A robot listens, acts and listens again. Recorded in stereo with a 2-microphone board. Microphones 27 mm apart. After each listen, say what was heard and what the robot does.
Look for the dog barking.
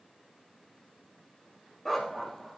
Turn 30° left.
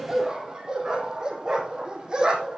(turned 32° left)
So it is at 30° right. Turn 30° right.
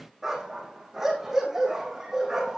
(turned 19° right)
The dog barking is now 15° right. Turn 15° right.
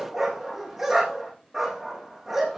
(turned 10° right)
Facing the dog barking, over 4 m away.